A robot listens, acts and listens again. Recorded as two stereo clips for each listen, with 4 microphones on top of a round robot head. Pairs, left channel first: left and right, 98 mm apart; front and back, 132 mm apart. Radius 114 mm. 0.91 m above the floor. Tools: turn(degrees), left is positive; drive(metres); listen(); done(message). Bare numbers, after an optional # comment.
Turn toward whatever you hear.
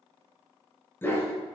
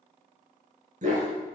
# The dog barking: 155° left.
turn(155)
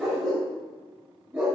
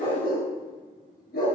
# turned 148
# The dog barking is now 15° right.
turn(-15)
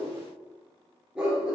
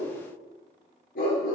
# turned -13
# The dog barking is now 10° right.
turn(-10)
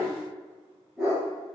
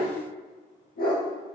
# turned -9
done("Found it: a dog barking, straight ahead, over 4 m away.")